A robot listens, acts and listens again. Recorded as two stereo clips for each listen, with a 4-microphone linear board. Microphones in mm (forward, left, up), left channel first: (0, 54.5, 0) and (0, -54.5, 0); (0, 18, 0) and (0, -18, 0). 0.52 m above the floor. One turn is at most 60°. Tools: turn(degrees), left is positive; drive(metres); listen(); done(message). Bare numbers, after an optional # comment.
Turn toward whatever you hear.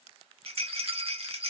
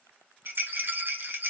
# The rattle: about 65° right or 115° right.
turn(-60)
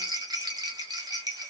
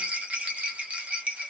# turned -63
# So it is at 40° right.
turn(-40)
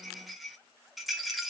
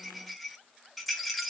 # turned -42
done("Found it: a rattle, straight ahead, 1 to 2 m away.")